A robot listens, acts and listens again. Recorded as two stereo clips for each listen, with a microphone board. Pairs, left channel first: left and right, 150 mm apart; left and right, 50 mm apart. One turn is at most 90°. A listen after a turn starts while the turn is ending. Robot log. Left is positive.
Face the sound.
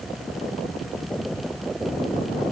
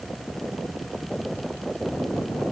cmd idle
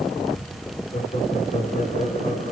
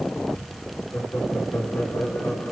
note: The laughter: about 60° left or 120° left.
cmd yaw +60
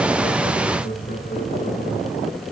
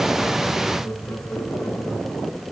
note: So it is at 55° left.
cmd yaw +55
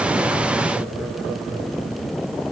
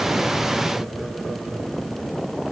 cmd idle
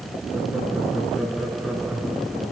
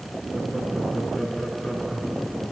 end: Found it: laughter, straight ahead, over 4 m away.